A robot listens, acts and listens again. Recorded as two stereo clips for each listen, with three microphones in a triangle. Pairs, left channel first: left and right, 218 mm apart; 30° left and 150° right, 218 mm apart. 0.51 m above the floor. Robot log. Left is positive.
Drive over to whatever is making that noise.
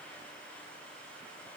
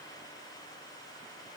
cmd idle
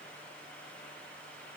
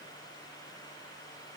cmd idle
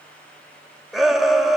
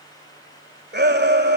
note: The shout: straight behind.
cmd yaw +180
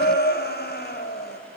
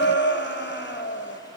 note: The shout is now 55° left.
cmd yaw +55
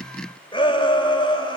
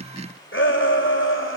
note: The shout is now 25° left.
cmd yaw +25
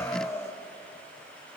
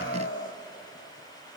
note: The shout is now 15° left.
cmd yaw +15
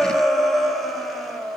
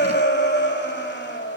cmd fwd 1.0
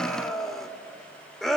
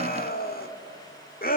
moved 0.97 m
cmd fwd 1.0
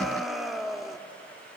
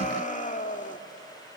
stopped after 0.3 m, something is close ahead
end: I am next to the shout.